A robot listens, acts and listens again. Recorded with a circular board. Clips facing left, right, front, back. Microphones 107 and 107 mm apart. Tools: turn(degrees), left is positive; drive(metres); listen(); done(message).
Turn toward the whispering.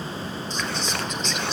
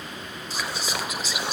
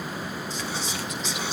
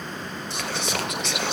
turn(degrees=-170)
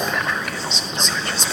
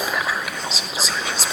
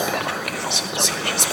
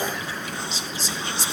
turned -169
done("Facing the whispering.")